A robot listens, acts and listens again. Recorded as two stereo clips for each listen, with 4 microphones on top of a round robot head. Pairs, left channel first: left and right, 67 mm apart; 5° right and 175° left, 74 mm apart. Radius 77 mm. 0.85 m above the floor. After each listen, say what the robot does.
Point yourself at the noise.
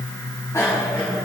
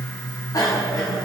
Turn 35° left.
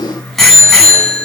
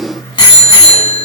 Found it: a bicycle bell, straight ahead.